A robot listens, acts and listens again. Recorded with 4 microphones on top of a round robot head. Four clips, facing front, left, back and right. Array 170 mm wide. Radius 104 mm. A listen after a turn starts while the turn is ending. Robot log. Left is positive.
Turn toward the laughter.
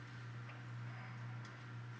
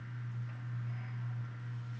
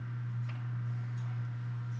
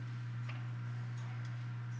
cmd idle
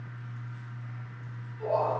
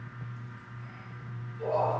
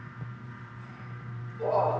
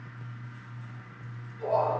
note: The laughter: 175° left.
cmd yaw +175
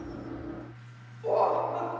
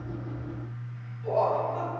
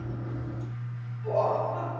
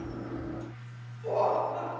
end: Facing the laughter, 2 to 4 m away.